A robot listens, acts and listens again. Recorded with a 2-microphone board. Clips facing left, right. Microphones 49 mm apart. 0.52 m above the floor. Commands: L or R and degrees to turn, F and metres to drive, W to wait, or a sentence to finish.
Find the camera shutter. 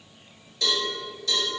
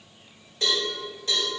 W
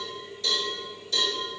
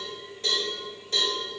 W
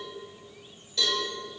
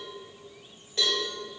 I can't make out a camera shutter to turn to.